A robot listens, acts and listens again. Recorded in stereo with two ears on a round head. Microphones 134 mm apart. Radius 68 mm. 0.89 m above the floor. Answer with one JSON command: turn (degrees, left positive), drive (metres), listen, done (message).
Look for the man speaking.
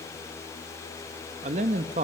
{"turn": -45}
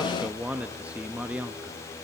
{"turn": -10}
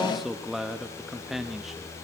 {"done": "Facing the man speaking."}